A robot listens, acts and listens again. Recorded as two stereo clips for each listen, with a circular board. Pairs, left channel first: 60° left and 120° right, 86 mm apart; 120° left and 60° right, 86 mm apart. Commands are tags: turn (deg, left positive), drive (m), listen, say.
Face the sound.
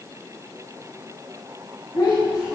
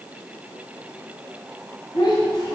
<turn deg="100"/>
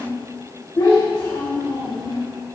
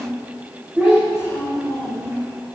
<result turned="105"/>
<turn deg="30"/>
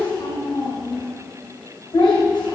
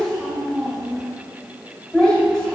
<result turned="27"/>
<turn deg="35"/>
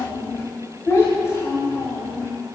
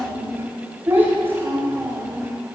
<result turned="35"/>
<say>Found it: a child speaking, straight ahead.</say>